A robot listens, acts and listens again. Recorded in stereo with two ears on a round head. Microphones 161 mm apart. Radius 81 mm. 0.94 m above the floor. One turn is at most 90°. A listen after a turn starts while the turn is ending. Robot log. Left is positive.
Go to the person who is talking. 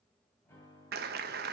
cmd idle
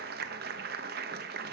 cmd idle
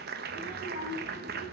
note: The child speaking: about 40° right or 140° right.
cmd yaw -40
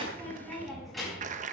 cmd fwd 1.0
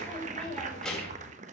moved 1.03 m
cmd fwd 1.0
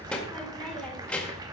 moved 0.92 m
cmd fwd 1.0
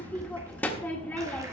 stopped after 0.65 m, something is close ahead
note: The child speaking is now 10° left.
cmd yaw +10
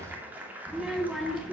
end: Arrived at the child speaking, straight ahead.